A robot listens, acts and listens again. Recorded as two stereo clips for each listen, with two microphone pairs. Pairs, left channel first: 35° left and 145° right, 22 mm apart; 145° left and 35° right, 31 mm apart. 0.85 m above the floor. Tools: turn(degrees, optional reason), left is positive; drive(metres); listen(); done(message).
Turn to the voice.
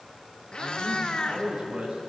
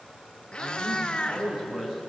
turn(degrees=-100, reason="The man speaking: 100° right.")
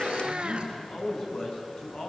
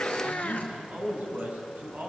done("Found it: a man speaking, straight ahead, over 4 m away.")